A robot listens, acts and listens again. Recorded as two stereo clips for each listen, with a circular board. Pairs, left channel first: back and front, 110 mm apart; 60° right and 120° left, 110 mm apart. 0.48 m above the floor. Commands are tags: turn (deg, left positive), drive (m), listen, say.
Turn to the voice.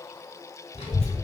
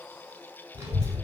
<turn deg="160"/>
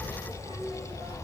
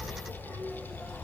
<turn deg="10"/>
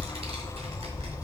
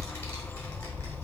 <say>Found it: a child speaking, straight ahead, 1 to 2 m away.</say>